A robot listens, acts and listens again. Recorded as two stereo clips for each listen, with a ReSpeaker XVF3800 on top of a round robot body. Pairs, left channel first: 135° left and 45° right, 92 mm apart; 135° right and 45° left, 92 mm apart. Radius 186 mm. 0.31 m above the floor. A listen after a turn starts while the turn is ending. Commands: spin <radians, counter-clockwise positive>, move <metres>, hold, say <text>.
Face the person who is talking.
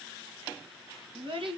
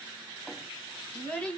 spin -1.05
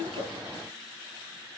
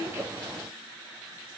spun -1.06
hold
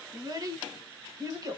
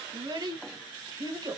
say Facing the child speaking.